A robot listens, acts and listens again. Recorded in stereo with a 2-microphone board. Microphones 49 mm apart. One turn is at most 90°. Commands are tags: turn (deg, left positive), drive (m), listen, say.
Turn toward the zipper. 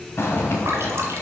<turn deg="55"/>
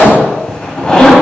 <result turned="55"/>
<turn deg="15"/>
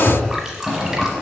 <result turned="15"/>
<say>Facing the zipper, 1 to 2 m away.</say>